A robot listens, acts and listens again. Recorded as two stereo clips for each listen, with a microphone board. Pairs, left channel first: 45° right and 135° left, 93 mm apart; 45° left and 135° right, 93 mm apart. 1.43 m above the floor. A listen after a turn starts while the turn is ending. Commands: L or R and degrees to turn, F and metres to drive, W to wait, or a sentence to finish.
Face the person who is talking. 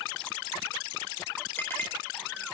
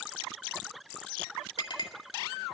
W
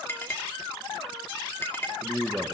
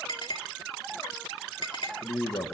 L50
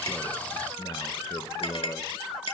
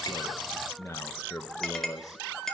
R10
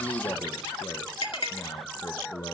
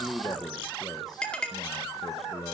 Found it: a man speaking, straight ahead, 1 to 2 m away.